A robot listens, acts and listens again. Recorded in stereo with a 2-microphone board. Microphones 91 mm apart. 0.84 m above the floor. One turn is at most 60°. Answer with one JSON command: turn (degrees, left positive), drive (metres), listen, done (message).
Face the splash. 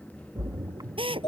{"turn": -45}
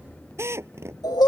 {"listen": true}
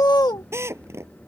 {"done": "I heard a splash, but can't make it out now. It was about straight ahead or 90° right."}